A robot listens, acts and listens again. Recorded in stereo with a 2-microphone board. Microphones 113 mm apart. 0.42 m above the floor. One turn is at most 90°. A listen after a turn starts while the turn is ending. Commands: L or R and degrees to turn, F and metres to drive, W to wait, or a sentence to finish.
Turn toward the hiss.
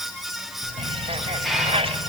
L30
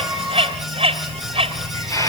L90
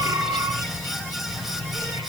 L60
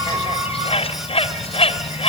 W
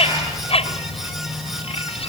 R25
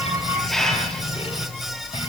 Found it: a hiss, straight ahead, over 4 m away.